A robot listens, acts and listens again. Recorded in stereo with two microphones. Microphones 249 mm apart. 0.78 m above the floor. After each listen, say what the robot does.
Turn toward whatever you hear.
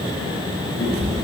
Turn 70° left.
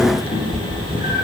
Turn 35° left.
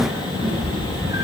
Turn 15° right.
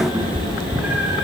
Turn 10° right.
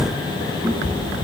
Turn 10° right.
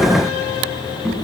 Facing the cat meowing, over 4 m away.